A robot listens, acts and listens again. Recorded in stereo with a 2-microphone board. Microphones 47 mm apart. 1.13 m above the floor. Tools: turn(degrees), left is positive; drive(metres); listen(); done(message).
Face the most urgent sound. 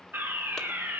turn(degrees=-45)
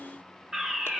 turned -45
turn(degrees=-15)
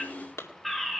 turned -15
done("Facing the fire alarm, 1 to 2 m away.")